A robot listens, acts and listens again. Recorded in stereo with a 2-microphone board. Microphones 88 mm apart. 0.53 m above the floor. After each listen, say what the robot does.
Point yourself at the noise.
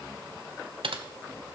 Turn 90° right.
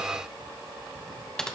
Facing the typing on a keyboard, 1 to 2 m away.